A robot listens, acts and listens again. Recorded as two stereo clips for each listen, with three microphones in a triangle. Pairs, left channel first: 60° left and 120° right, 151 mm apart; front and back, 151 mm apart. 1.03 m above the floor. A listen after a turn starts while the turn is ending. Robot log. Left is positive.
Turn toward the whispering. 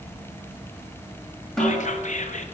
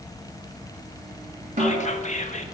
note: The whispering: 30° left.
cmd yaw +30
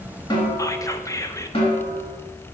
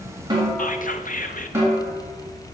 end: Found it: whispering, straight ahead, under 1 m away.